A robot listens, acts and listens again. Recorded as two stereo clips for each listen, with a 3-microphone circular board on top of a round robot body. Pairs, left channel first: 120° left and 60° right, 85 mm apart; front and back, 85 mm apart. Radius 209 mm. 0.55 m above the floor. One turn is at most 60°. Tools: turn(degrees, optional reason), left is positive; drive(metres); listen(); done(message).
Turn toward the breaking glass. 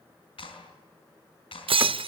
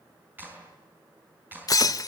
turn(degrees=-45, reason="The breaking glass: 45° right.")
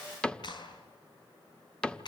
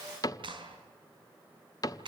done("I heard breaking glass from this way, but can't make it out now.")